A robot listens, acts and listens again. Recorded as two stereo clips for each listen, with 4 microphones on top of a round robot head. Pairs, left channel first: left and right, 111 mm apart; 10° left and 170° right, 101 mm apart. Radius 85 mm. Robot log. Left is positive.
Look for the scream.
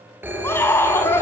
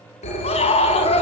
note: The scream: 20° left.
cmd yaw +20
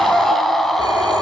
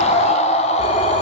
end: Facing the scream, over 4 m away.